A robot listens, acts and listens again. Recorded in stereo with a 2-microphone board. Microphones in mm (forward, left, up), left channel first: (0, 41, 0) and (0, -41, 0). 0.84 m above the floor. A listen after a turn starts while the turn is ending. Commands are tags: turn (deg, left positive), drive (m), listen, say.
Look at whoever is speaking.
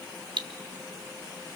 <listen/>
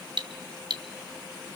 <listen/>
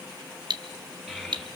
<turn deg="-30"/>
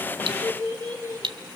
<turn deg="30"/>
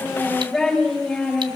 <say>Found it: a child speaking, straight ahead.</say>